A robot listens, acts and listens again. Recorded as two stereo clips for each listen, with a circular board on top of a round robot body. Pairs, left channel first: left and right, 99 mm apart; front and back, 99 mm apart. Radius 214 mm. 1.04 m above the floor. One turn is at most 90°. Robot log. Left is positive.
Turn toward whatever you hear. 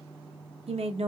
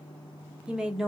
note: The woman speaking: 95° right.
cmd yaw -90
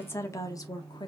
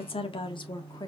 note: The woman speaking is now 45° left.
cmd yaw +45
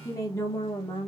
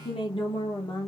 note: The woman speaking is now 45° left.
cmd yaw +45
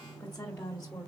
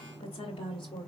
note: The woman speaking is now 20° left.
cmd yaw +20
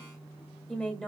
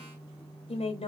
end: Facing the woman speaking, 2 to 4 m away.